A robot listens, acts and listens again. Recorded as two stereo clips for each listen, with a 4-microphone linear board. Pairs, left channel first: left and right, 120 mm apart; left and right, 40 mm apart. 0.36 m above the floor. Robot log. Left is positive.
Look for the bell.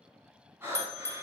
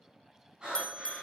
note: The bell: about 20° left or 160° left.
cmd yaw +20
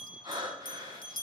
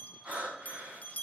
note: So it is at 140° left.
cmd yaw +140
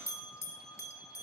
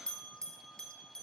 note: The bell is now 25° left.
cmd yaw +25
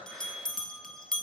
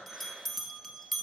end: Facing the bell, 1 to 2 m away.